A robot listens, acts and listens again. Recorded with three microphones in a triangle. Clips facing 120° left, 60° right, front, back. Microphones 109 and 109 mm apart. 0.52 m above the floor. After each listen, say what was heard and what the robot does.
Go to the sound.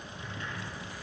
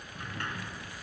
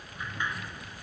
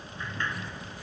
The sliding door: 75° right. Turn 75° right.
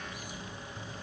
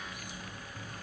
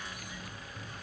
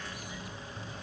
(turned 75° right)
Keep listening.
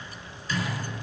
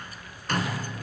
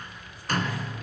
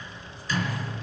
The sliding door is now 30° right. Turn 30° right.
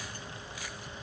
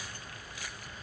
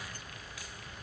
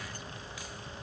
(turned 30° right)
Keep listening.
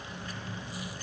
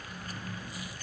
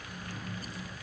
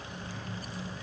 The sliding door is now 10° right. Turn 10° right.
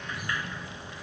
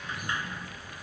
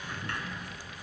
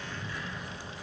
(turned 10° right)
Drive 1.0 m forward.
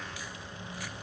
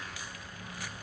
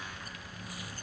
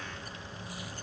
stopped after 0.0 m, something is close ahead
Keep listening.
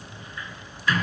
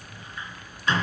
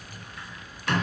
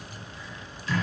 Something is in my way. I am facing the sliding door but have not reached it.